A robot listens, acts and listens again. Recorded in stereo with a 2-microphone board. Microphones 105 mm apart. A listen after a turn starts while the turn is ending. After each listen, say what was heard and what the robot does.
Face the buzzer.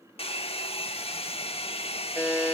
The buzzer: about 20° left or 160° left. Turn 20° left.
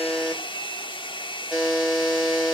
Facing the buzzer.